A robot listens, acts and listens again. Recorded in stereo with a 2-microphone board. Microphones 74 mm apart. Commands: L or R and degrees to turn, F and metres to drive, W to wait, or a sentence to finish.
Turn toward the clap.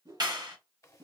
R60
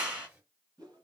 R20
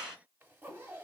Found it: a clap, straight ahead.